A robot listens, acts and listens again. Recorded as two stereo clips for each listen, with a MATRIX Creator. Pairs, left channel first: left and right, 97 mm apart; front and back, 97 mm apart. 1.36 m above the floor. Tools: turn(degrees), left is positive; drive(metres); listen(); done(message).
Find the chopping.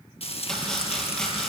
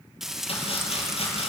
turn(degrees=10)
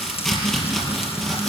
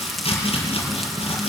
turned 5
done("Found it: chopping, straight ahead, over 4 m away.")